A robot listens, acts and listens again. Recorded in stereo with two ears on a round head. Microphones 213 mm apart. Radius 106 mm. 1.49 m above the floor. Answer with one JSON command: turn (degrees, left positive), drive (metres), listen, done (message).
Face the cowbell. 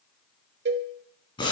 {"turn": -45}
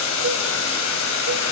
{"listen": true}
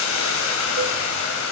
{"listen": true}
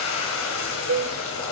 {"turn": -75}
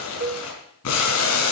{"turn": -40}
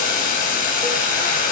{"listen": true}
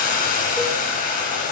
{"listen": true}
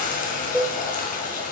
{"done": "Facing the cowbell."}